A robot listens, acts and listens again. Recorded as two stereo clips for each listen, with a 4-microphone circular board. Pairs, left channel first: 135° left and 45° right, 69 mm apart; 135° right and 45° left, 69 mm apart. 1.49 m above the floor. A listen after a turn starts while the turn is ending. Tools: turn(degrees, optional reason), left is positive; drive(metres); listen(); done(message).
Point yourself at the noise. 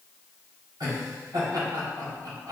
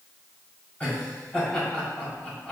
turn(degrees=-65, reason="The laughter: 65° right.")
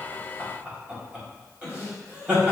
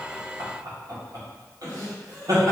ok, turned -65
turn(degrees=20, reason="The laughter is now 20° left.")
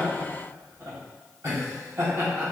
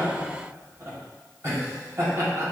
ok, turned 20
done("Facing the laughter, 1 to 2 m away.")